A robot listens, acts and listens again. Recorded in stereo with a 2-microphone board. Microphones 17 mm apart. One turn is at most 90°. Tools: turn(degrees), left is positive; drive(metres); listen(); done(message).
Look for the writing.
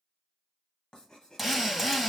turn(degrees=50)
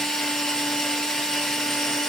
listen()
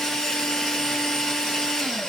listen()
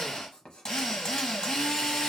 turn(degrees=70)
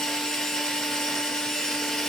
listen()
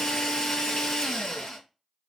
listen()
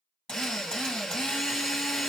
done("I heard writing from this way, but can't make it out now.")